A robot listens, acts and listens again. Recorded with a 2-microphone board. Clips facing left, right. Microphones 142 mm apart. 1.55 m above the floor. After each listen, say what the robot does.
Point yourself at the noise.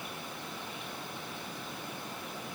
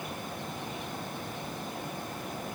Keep listening.
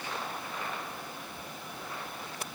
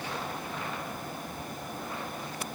Keep listening.
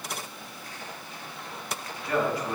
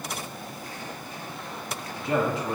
Turn 25° right.
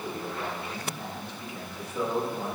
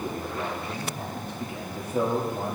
Turn 130° right.
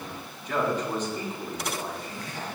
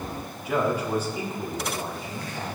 Turn 10° right.
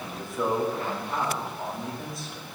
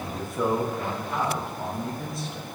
Found it: a man speaking, straight ahead, 2 to 4 m away.